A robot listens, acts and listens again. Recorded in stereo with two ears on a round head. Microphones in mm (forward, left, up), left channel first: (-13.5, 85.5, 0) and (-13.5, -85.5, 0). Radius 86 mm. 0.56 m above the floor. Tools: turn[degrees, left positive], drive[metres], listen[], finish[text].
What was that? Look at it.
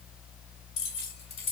Thought: The keys jangling: about 30° left or 150° left.
Action: turn[30]
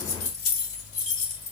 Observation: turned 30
Thought: The keys jangling: about 40° left or 140° left.
Action: turn[40]
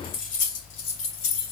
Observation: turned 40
Thought: So it is at 110° left.
Action: turn[110]
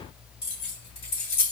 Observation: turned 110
Thought: The keys jangling is now 30° left.
Action: turn[30]
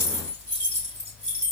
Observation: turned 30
Action: finish[Facing the keys jangling.]